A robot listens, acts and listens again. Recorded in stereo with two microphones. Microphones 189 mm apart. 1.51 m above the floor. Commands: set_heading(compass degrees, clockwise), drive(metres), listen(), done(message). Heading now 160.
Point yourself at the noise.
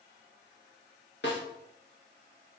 set_heading(90)
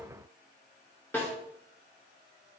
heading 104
set_heading(94)
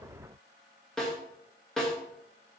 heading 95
done("Found it: a snare drum, straight ahead, 2 to 4 m away.")